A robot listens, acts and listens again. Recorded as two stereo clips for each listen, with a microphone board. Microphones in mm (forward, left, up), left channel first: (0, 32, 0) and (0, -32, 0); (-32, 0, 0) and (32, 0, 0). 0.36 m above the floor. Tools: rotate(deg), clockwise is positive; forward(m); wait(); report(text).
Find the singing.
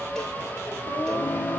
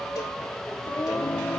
rotate(-130)
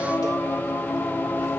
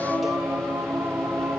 rotate(-45)
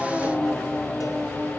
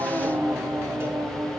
rotate(-10)
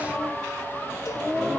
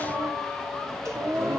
report("Facing the singing.")